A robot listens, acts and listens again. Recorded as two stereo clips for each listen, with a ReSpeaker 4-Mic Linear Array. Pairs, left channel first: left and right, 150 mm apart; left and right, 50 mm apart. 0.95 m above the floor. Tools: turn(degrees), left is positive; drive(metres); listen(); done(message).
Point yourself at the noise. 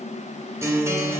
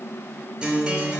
turn(degrees=-15)
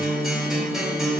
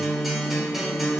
done("Found it: a guitar, straight ahead.")